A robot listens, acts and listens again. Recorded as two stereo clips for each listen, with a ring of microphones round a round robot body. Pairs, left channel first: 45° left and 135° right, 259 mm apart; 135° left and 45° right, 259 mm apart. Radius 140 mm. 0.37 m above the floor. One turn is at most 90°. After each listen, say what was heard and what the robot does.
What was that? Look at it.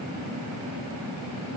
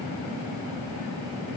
Keep listening.
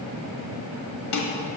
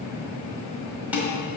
The dishes clattering: 40° left. Turn 40° left.
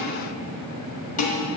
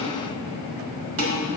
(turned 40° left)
The dishes clattering is now 15° right. Turn 15° right.
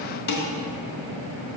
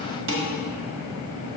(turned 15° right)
Facing the dishes clattering, 1 to 2 m away.